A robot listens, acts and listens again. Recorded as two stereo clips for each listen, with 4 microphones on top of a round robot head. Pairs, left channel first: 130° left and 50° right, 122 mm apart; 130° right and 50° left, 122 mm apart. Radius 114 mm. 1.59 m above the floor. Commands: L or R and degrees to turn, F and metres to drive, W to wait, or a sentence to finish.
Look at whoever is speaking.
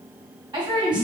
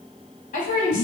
R105
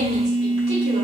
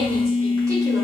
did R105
W
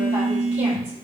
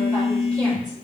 W
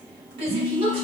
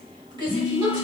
Facing the woman speaking.